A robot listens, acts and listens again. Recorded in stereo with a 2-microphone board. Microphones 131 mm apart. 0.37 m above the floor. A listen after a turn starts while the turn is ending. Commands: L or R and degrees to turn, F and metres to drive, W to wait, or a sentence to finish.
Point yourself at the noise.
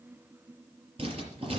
R45
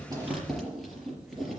Facing the writing.